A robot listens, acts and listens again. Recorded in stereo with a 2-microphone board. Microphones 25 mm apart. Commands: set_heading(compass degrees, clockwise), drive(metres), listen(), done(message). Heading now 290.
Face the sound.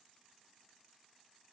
listen()
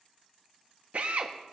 set_heading(350)
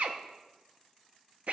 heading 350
set_heading(45)
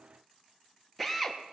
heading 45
done("Facing the drill.")